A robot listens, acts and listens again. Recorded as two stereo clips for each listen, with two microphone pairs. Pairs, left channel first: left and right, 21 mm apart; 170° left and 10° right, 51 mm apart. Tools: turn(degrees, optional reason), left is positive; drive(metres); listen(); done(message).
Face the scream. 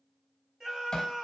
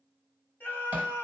turn(degrees=-140, reason="The scream: 140° right.")
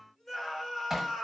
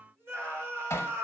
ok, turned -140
turn(degrees=10, reason="The scream is now 10° left.")
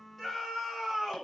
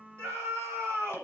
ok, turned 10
done("Found it: a scream, straight ahead, 1 to 2 m away.")